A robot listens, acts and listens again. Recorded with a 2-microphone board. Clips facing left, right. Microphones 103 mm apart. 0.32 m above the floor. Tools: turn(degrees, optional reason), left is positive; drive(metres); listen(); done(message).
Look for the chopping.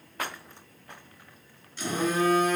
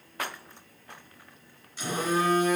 listen()
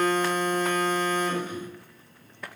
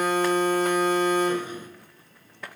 listen()
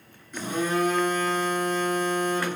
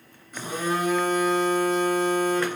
done("I can't make out chopping, only a phone buzzing.")